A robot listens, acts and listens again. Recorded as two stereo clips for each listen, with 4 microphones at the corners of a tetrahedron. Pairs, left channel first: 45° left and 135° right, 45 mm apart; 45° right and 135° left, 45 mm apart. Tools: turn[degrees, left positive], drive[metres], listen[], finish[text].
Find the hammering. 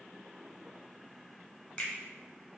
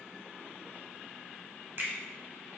Action: listen[]
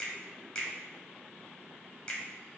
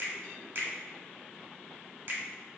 Action: listen[]
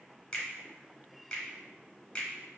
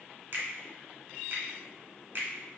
Action: finish[I can't make out hammering, only a finger snap.]